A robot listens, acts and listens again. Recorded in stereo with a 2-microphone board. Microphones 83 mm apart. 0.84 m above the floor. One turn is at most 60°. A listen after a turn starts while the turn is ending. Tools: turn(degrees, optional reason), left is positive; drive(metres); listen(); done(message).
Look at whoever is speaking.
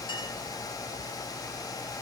listen()
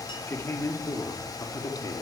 turn(degrees=45, reason="The man speaking: about 45° left or 135° left.")
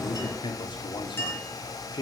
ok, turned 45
turn(degrees=60, reason="So it is at 65° left.")
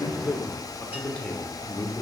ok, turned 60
turn(degrees=15, reason="The man speaking is now 15° left.")
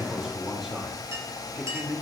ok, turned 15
done("Facing the man speaking.")